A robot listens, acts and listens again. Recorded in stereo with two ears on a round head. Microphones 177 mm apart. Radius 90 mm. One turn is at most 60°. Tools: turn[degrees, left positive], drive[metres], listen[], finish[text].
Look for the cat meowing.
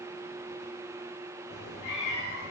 Thought: The cat meowing: about 55° left or 125° left.
Action: turn[55]
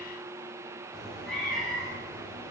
Action: finish[Found it: a cat meowing, straight ahead, over 4 m away.]